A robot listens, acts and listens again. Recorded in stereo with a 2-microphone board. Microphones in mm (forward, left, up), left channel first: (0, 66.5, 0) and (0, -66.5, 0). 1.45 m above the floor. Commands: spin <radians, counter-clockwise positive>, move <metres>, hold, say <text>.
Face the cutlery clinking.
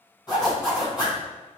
hold
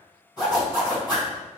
hold
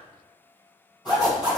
say I can't make out cutlery clinking to turn to.